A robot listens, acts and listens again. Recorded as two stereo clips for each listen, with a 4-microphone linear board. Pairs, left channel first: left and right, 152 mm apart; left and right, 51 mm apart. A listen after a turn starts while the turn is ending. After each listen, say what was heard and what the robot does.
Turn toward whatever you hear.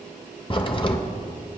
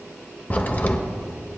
The crack: about 35° left or 145° left. Turn 35° left.
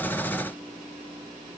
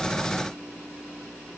Keep listening.
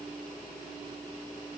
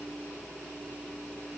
I heard a crack, but can't make it out now. It was about straight ahead or 110° left.